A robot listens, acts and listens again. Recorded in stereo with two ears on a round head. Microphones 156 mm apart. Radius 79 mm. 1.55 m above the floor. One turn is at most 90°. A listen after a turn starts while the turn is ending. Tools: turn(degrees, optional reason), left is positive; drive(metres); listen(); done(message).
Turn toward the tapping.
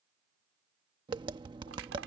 turn(degrees=-25, reason="The tapping: about 25° right or 155° right.")
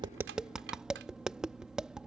done("Found it: tapping, straight ahead.")